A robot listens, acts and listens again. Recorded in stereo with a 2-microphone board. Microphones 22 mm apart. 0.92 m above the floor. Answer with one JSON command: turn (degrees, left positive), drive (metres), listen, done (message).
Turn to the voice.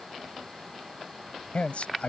{"turn": 70}
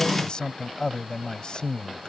{"turn": 35}
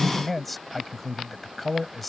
{"done": "Facing the man speaking."}